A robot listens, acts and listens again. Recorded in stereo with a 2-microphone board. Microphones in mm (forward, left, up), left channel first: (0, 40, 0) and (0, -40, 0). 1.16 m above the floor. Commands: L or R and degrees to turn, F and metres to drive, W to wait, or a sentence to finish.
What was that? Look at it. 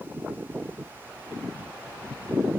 W
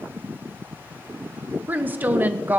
R20
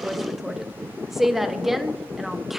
Facing the woman speaking.